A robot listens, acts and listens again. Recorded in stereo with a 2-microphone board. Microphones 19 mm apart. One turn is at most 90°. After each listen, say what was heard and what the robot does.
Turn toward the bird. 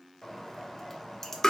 The bird: about 15° left or 165° left. Turn 15° left.
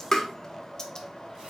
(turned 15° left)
So it is at 150° left. Turn 90° left.
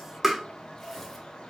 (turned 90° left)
The bird is now 95° left. Turn 90° left.
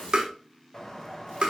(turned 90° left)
The bird is now 25° left. Turn 25° left.
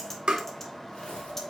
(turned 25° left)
The bird is now 15° left. Turn 15° left.
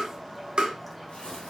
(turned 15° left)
Facing the bird, under 1 m away.